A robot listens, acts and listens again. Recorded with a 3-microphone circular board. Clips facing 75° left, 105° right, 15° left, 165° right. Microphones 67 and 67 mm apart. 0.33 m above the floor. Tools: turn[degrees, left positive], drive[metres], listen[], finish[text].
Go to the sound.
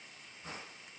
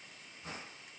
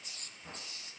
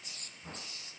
Action: listen[]
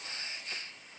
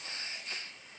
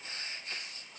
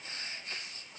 Action: listen[]
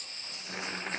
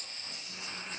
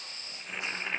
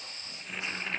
Thought: The boiling: 95° left.
Action: turn[95]
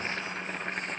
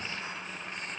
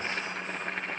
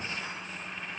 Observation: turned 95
Thought: The boiling is now 40° left.
Action: turn[40]
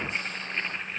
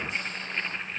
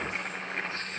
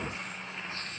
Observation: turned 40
Thought: The boiling is now 10° right.
Action: turn[-10]
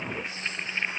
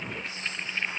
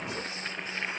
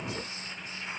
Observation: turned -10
Action: drive[1.0]
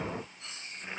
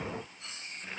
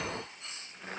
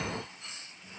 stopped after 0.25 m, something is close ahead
Action: finish[Something is in my way. I am facing the boiling but have not reached it.]